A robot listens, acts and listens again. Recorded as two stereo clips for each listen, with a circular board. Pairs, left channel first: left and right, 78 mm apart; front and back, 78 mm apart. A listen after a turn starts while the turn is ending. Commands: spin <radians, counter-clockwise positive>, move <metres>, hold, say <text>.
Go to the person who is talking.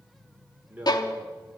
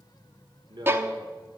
spin -2.79
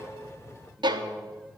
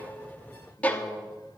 hold
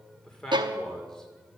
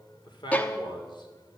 move 1.0
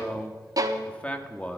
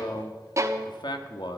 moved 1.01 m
spin 0.26
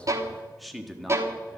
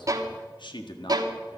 move 1.0
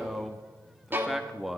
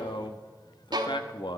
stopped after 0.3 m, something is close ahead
say I am next to the man speaking.